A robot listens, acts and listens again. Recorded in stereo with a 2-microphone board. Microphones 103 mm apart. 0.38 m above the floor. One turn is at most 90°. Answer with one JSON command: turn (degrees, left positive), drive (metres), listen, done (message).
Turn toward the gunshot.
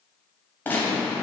{"turn": 20}
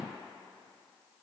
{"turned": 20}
{"listen": true}
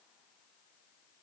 {"done": "I heard a gunshot, but can't make it out now. It was about straight ahead or 140° left."}